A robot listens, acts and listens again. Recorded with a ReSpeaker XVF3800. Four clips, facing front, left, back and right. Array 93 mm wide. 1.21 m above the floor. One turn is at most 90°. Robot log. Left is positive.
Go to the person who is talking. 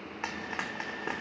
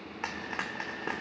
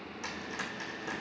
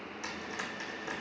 cmd idle
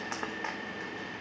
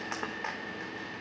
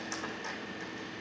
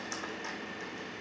cmd idle
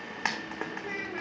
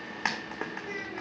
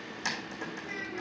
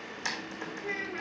note: The child speaking: 40° right.
cmd yaw -40
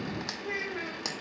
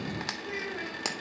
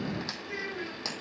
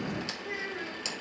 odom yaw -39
cmd fwd 1.0
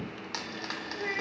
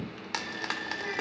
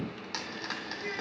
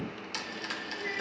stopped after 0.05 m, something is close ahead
end: Something is in my way. I am facing the child speaking but have not reached it.